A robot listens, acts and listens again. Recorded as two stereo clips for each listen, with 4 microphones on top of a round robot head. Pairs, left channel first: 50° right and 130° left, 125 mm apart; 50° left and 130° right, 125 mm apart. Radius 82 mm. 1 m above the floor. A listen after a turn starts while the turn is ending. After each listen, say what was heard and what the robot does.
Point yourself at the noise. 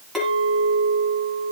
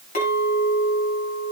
The clink: 40° left. Turn 40° left.
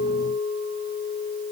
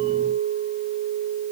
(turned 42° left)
Found it: a clink, straight ahead, over 4 m away.